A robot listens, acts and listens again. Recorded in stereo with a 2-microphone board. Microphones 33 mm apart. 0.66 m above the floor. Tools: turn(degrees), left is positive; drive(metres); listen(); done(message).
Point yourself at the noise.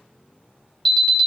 turn(degrees=15)
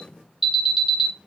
done("Found it: an alarm, straight ahead, 2 to 4 m away.")